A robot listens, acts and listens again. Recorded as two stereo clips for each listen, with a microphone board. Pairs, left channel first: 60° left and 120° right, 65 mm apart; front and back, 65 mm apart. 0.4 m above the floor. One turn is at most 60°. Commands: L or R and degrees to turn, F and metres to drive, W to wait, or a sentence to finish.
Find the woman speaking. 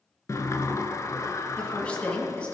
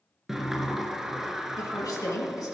R10
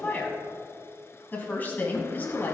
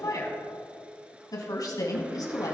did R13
Found it: a woman speaking, straight ahead.